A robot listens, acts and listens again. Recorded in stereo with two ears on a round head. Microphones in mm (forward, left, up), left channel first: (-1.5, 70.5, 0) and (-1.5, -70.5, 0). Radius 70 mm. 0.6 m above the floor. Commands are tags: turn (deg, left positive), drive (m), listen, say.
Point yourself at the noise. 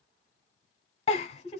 <turn deg="40"/>
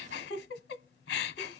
<turn deg="100"/>
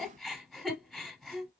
<say>Found it: a giggle, straight ahead, under 1 m away.</say>